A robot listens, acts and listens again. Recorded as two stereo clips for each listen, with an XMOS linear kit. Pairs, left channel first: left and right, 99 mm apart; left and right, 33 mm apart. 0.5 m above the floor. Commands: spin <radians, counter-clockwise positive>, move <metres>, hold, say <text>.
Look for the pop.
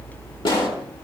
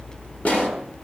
spin 0.52
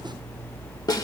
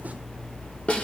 hold
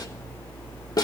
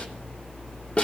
say I heard a pop, but can't make it out now. It was about straight ahead or 120° left.